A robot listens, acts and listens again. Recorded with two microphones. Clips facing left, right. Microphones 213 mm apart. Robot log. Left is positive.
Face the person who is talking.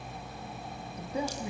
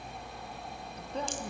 cmd yaw +30
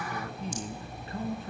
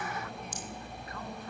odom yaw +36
note: So it is at 155° left.
cmd yaw +155
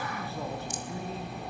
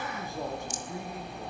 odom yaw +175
note: The man speaking is now 15° right.
cmd yaw -15
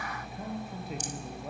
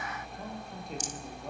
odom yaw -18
end: Found it: a man speaking, straight ahead.